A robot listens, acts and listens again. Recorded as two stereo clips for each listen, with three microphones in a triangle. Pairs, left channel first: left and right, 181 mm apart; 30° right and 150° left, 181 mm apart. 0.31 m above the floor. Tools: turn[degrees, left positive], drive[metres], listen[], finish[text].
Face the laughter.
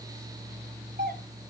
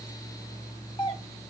Action: listen[]
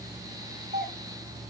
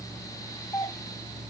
Action: listen[]
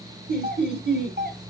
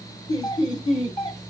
Thought: The laughter: 95° right.
Action: turn[-95]
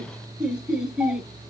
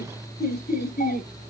Action: finish[Facing the laughter, over 4 m away.]